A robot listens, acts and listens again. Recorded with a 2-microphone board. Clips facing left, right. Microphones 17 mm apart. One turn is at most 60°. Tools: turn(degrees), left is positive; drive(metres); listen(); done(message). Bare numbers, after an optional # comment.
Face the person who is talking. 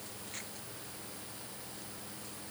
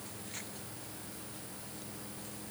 listen()
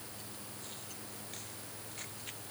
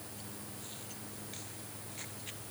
listen()
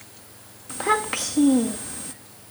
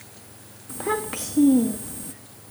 # The child speaking: about 25° left or 155° left.
turn(25)
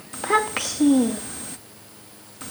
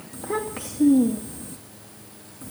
# So it is at 130° left.
turn(60)
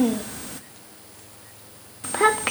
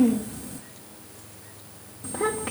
# The child speaking is now 65° left.
turn(60)
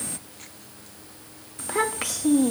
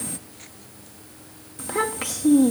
done("Facing the child speaking.")